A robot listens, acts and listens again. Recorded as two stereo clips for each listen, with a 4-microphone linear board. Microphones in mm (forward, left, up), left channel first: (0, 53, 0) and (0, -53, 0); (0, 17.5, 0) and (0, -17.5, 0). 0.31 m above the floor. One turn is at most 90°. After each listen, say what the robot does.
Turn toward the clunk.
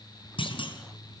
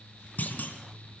Turn 50° left.
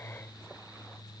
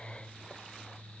Keep listening.
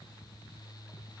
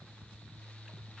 I heard a clunk, but can't make it out now. It was about straight ahead or 80° left.